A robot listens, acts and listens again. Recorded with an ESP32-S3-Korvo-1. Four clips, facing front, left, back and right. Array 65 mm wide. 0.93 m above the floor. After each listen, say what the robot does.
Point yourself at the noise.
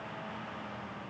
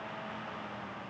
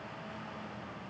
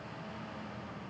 Keep listening.
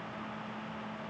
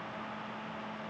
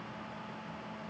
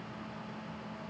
Keep listening.
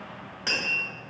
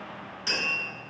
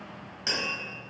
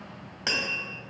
Turn 70° right.
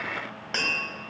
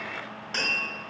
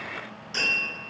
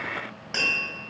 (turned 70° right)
Turn 10° right.
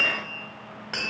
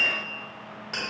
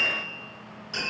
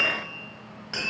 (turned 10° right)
Facing the tapping, 1 to 2 m away.